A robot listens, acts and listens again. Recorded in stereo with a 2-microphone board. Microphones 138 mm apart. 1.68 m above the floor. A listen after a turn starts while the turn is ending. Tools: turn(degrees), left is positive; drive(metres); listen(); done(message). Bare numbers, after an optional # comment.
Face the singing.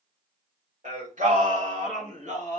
# The singing: about 60° right or 120° right.
turn(-60)
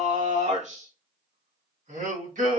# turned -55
# So it is at 70° right.
turn(-70)
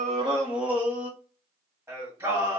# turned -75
# The singing is now 20° right.
turn(-20)
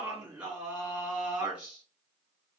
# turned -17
done("Found it: singing, straight ahead.")